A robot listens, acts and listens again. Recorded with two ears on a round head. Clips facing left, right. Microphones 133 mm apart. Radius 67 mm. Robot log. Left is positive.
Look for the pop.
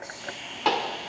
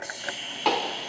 cmd yaw -30
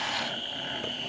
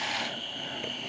cmd idle
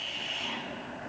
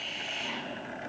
end: I heard a pop, but can't make it out now. It was about 25° left or 145° right.